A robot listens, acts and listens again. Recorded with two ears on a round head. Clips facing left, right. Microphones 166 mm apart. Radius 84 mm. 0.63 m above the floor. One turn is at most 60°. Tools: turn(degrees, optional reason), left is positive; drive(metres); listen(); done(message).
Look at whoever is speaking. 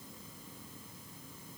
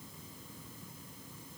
listen()
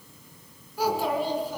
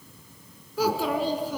turn(degrees=-60, reason="The child speaking: about 65° right or 115° right.")
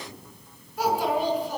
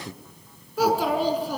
turn(degrees=-55, reason="So it is at 55° right.")
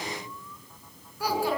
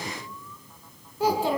turn(degrees=-20, reason="The child speaking is now 20° right.")
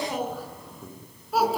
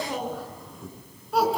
done("Facing the child speaking, over 4 m away.")